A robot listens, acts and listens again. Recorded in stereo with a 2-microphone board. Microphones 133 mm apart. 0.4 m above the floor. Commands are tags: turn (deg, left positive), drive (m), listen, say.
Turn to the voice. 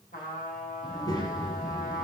<turn deg="25"/>
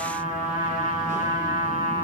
<listen/>
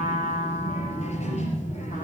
<turn deg="125"/>
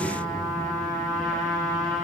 <turn deg="-25"/>
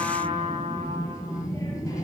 <turn deg="25"/>
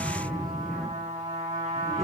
<say>Found it: a child speaking, straight ahead.</say>